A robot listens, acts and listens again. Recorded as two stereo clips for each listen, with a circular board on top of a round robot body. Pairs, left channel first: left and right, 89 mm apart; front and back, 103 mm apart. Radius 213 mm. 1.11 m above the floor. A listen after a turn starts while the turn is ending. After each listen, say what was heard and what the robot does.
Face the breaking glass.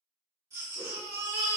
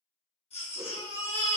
Keep listening.
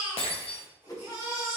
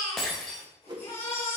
The breaking glass: 85° left. Turn 85° left.
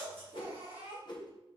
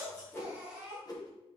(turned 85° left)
Facing where the breaking glass came from. I can't hear it now.